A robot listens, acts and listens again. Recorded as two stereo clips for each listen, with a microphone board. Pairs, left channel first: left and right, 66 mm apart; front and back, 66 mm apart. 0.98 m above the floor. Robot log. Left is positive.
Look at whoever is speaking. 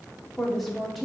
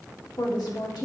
end: Facing the woman speaking.